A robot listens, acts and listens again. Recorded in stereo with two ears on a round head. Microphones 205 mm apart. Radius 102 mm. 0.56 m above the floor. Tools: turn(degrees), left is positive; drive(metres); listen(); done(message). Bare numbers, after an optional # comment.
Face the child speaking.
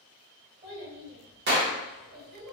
# The child speaking: about 50° right or 130° right.
turn(-50)
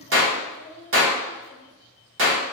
# So it is at 60° right.
turn(-60)
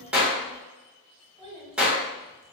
# The child speaking is now 30° left.
turn(30)
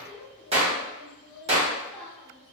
done("Found it: a child speaking, straight ahead.")